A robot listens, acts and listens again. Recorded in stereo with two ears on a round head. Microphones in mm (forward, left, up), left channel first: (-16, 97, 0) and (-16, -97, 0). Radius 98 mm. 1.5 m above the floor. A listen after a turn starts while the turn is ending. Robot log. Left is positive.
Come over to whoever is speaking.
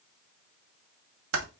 cmd idle
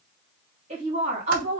note: The woman speaking: about 30° right or 150° right.
cmd yaw -30
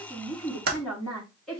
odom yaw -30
cmd fwd 1.0
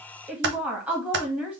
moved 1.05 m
cmd fwd 1.0
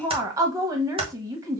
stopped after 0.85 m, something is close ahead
note: The woman speaking is now 15° right.
cmd yaw -15
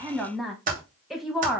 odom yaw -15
end: I am next to the woman speaking.